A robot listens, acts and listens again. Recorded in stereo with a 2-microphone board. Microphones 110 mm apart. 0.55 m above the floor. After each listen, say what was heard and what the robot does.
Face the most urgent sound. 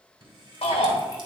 The shout: about 65° left or 115° left. Turn 65° left.
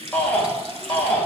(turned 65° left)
So it is at 15° left. Turn 15° left.
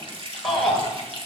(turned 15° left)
Facing the shout, 2 to 4 m away.